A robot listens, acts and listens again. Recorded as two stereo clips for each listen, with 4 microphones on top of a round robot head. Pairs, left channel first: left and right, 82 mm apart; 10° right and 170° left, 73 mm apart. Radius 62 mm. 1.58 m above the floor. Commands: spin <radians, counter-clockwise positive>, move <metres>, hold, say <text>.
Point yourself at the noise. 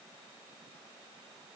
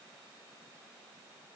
hold
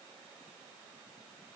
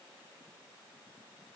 hold
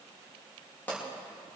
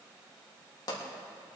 spin 0.26
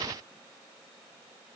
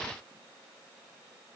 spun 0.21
say I heard a pop from this way, but can't make it out now.